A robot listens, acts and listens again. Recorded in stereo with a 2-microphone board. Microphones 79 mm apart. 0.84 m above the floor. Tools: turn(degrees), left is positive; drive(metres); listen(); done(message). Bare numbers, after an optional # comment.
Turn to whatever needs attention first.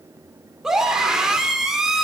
turn(-30)
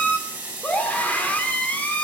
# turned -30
# So it is at 20° left.
turn(20)
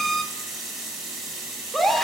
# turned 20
done("Found it: a scream, straight ahead.")